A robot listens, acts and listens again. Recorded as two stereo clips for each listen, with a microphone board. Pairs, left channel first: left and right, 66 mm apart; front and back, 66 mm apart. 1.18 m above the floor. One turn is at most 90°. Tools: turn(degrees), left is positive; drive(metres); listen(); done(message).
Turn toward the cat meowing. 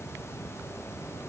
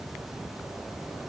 listen()
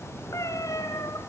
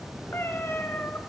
turn(degrees=60)
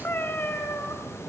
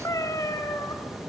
turn(degrees=30)
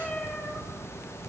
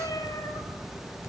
turn(degrees=15)
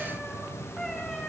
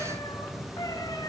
turn(degrees=10)
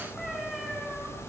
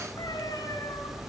done("Facing the cat meowing, over 4 m away.")